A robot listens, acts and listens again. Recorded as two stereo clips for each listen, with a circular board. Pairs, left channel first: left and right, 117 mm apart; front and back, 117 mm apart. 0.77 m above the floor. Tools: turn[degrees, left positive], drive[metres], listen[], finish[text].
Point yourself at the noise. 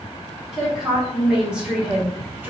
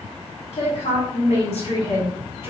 Thought: The woman speaking: 20° right.
Action: turn[-20]
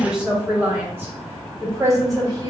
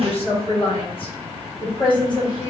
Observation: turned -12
Thought: The woman speaking is now 40° right.
Action: turn[-40]
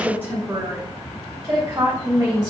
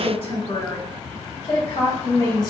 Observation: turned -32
Thought: The woman speaking is now 35° right.
Action: turn[-35]
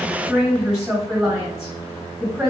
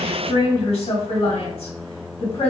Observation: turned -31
Action: finish[Facing the woman speaking, 1 to 2 m away.]